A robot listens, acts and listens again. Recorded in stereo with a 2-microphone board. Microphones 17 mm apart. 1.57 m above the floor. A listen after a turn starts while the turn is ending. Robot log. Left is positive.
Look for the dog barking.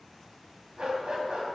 note: The dog barking: about 75° right or 105° right.
cmd yaw -75
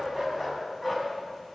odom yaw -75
end: Facing the dog barking.